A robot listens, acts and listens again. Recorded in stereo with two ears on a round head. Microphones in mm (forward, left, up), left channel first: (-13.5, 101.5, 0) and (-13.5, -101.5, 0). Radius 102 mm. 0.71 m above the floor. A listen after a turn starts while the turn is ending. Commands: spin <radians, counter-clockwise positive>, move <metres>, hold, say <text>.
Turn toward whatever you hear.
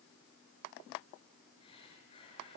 spin 0.44
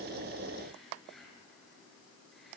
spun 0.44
say Facing the breathing, over 4 m away.